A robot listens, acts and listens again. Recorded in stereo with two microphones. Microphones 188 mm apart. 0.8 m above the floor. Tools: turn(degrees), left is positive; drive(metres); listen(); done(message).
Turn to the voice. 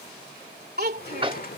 turn(degrees=-55)
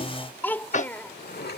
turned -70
turn(degrees=10)
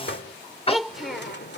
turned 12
done("Facing the child speaking.")